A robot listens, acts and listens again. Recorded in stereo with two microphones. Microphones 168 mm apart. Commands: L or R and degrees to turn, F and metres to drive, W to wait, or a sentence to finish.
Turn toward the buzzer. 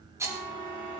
L55
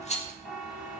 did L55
Facing the buzzer, over 4 m away.